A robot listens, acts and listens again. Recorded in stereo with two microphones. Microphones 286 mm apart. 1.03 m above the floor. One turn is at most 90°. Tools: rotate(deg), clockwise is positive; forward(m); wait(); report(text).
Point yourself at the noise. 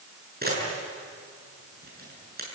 rotate(35)
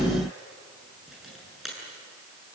report("Found it: a camera shutter, straight ahead, over 4 m away.")